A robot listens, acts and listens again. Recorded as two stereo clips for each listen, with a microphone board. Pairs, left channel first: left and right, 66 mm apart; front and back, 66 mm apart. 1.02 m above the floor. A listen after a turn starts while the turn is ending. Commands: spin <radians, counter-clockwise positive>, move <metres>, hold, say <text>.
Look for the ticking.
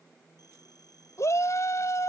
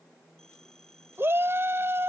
hold
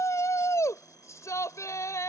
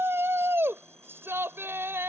hold
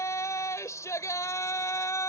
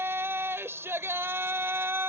say I can't make out ticking to turn to.